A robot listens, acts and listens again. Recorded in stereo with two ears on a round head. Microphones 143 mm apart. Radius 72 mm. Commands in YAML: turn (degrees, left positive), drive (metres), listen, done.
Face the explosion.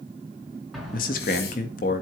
turn: 30
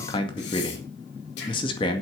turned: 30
listen: true
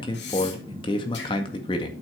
done: "I heard an explosion, but can't make it out now. It was about 30° right or 150° left."